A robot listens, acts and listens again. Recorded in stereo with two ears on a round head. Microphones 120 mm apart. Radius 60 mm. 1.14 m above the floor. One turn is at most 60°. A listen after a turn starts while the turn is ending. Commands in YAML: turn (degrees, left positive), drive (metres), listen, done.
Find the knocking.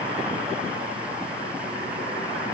listen: true
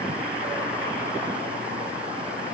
listen: true
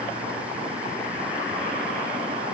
done: "I can't make out knocking."